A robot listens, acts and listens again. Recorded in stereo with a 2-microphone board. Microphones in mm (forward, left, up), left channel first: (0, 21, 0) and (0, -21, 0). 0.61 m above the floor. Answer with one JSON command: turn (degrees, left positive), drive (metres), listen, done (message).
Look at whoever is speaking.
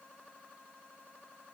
{"listen": true}
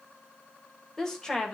{"turn": 15}
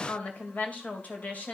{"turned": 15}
{"turn": 40}
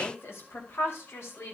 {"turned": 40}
{"turn": 105}
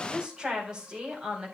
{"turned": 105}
{"turn": -20}
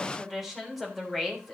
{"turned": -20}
{"done": "Facing the woman speaking, over 4 m away."}